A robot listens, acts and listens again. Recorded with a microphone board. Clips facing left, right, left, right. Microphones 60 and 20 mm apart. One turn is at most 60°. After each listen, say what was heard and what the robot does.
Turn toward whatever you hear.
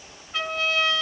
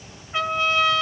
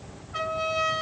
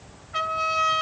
The trumpet: about 25° right or 155° right. Turn 25° right.
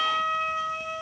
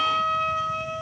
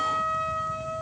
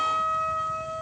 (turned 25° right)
Found it: a trumpet, straight ahead, 2 to 4 m away.